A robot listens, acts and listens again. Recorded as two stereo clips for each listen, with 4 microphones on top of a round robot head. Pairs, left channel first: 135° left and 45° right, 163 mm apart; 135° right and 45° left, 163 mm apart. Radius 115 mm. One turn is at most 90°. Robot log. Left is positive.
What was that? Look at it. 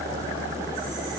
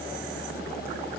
cmd idle
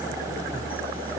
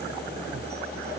cmd idle
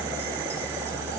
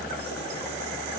end: I can't make out anything.